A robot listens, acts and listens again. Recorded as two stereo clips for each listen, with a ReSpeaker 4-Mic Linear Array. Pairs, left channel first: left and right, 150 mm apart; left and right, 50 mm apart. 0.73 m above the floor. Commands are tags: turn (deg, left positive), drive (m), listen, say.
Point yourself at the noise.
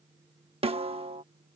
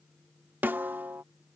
<turn deg="-40"/>
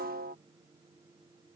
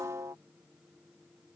<turn deg="-95"/>
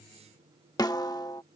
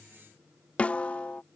<turn deg="25"/>
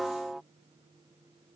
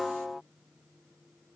<say>Facing the snare drum.</say>